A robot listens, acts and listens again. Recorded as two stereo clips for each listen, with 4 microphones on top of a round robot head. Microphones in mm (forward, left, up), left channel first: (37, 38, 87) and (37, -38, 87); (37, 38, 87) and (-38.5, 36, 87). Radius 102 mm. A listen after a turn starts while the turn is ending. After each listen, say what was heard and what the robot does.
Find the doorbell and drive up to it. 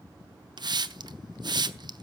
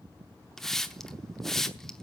Keep listening.
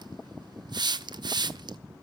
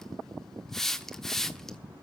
Keep listening.
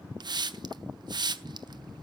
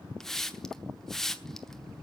I can't make out a doorbell to turn to.